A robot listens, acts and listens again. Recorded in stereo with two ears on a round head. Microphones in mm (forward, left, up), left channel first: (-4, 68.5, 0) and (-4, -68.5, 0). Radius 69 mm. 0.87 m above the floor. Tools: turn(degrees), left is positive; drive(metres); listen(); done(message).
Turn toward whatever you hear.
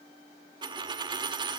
turn(degrees=-30)
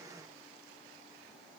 listen()
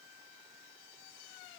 done("I heard a dropped coin, but can't make it out now. It was about straight ahead or 120° right.")